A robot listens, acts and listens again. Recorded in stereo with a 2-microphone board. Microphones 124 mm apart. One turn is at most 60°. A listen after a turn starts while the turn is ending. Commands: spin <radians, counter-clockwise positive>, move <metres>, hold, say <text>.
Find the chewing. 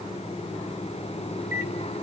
hold
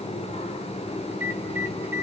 hold
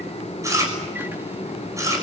spin -0.44
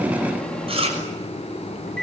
spin -1.05
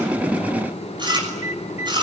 spin -0.70
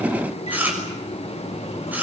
spin -0.26
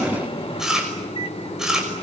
say Facing the chewing, over 4 m away.